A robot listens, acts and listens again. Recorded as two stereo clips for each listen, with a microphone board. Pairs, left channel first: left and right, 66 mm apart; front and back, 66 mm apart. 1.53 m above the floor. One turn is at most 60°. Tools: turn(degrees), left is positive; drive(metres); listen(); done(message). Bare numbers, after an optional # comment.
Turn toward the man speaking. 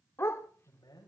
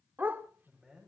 # The man speaking: 100° left.
turn(60)
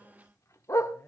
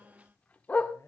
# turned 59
# The man speaking is now 45° left.
turn(45)
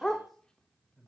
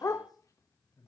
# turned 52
done("Found it: a man speaking, straight ahead.")